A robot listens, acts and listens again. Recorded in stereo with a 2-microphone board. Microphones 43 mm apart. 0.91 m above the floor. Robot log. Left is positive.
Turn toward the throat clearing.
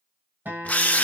cmd idle
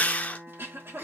note: The throat clearing: about 65° right or 115° right.
cmd yaw -65
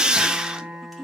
end: Found it: throat clearing, straight ahead.